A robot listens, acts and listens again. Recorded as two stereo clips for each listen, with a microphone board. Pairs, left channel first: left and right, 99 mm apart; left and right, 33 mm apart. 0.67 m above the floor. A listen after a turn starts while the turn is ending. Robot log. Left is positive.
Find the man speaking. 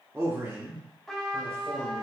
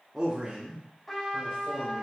note: The man speaking: about 35° right or 145° right.
cmd yaw -35
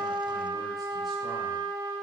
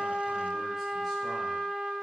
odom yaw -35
cmd idle
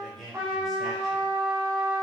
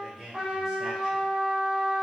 end: Found it: a man speaking, straight ahead, 2 to 4 m away.